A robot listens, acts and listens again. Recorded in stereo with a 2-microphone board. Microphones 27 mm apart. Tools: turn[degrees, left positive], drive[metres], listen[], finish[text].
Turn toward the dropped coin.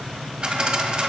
Thought: The dropped coin: about 35° right or 145° right.
Action: turn[-35]
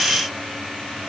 Action: listen[]
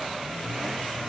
Action: finish[I heard a dropped coin, but can't make it out now. It was about straight ahead or 110° right.]